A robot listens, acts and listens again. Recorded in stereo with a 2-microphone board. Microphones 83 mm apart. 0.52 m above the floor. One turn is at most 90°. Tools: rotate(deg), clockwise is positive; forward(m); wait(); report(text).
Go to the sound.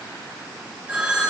rotate(15)
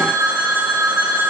rotate(90)
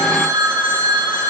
rotate(70)
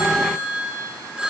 rotate(15)
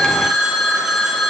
forward(1.0)
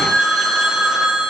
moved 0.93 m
forward(1.0)
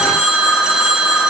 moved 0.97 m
rotate(10)
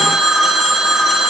forward(1.0)
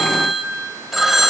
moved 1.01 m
forward(1.0)
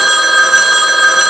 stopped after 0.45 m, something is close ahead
report("Arrived at the phone ringing, straight ahead.")